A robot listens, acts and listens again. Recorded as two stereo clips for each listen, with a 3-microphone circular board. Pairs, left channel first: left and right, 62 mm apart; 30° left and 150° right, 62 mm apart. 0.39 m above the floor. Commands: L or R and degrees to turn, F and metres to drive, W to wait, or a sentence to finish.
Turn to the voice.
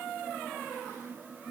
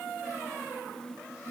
W
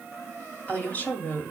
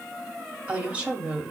L145
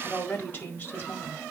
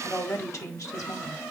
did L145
L40
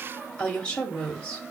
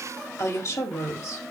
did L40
L20
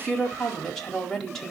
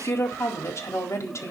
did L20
L10
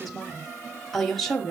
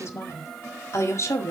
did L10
Facing the woman speaking, 1 to 2 m away.